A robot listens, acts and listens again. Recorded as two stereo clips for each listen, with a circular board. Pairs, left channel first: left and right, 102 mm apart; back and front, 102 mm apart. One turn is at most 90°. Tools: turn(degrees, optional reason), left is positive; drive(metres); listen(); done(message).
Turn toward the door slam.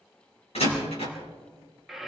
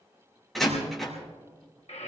turn(degrees=90, reason="The door slam: 90° left.")
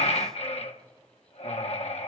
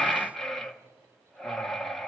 done("Facing where the door slam came from. I can't hear it now.")